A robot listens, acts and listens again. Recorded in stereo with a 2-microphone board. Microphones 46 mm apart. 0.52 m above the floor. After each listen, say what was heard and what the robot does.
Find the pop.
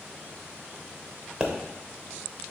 The pop: about 15° right or 165° right. Turn 15° right.
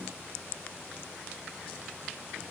Keep listening.
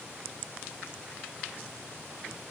I heard a pop, but can't make it out now. It was about straight ahead or 150° right.